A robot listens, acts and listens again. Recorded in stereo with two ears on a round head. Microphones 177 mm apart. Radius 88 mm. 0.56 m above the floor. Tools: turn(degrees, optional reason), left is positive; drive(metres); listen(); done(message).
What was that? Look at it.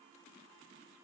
listen()
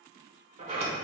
turn(degrees=-35, reason="The sliding door: about 35° right or 145° right.")
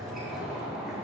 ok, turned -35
done("Found it: a sliding door, straight ahead.")